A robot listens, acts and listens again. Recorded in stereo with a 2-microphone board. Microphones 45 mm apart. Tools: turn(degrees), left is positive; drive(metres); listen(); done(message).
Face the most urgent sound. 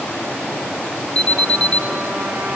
turn(degrees=25)
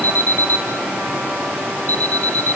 turn(degrees=130)
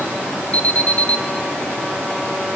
turn(degrees=40)
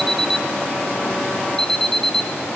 turn(degrees=15)
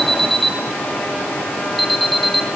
done("Facing the alarm.")